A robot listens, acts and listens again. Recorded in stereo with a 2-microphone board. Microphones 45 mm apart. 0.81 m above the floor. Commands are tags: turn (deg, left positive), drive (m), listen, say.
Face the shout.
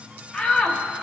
<turn deg="30"/>
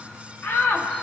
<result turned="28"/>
<turn deg="120"/>
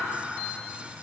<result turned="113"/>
<turn deg="10"/>
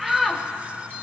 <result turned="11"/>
<say>Facing the shout, 1 to 2 m away.</say>